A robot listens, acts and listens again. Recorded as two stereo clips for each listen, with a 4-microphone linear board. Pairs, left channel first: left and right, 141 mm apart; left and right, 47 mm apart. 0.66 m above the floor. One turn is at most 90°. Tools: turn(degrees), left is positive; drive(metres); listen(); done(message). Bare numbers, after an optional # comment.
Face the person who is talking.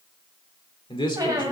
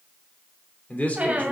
# The man speaking: about 35° left or 145° left.
turn(35)
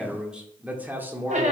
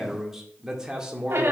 # So it is at 15° right.
turn(-15)
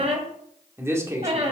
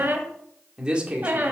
# The man speaking is now 20° right.
turn(-20)
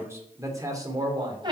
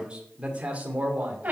# The man speaking is now 30° right.
turn(-30)
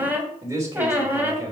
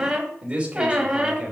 # The man speaking is now 20° right.
turn(-20)
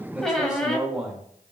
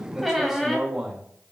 done("Facing the man speaking.")